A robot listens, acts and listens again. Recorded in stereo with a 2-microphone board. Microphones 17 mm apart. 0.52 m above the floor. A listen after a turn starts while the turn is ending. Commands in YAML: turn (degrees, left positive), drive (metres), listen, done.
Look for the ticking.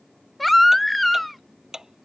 turn: -30
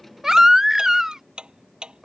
turn: -115
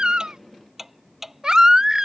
turn: -10
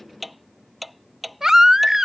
done: "Found it: ticking, straight ahead."